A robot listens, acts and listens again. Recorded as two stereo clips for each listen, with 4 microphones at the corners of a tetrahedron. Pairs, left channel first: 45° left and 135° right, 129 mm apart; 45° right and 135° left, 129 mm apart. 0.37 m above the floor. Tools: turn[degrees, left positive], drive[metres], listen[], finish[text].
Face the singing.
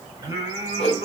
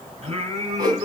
Thought: The singing: 160° left.
Action: turn[160]
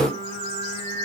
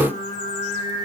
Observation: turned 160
Action: finish[Found it: singing, straight ahead, 2 to 4 m away.]